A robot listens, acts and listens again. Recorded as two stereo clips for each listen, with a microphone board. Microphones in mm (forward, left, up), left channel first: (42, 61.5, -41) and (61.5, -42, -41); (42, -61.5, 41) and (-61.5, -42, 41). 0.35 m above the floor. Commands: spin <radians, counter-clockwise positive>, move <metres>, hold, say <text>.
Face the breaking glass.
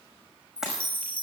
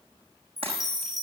spin -2.88
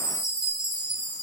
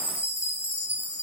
say I heard breaking glass from this way, but can't make it out now.